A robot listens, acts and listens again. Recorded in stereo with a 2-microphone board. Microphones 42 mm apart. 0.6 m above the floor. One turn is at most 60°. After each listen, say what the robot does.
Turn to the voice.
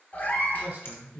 Turn 45° right.
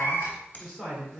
Facing the man speaking.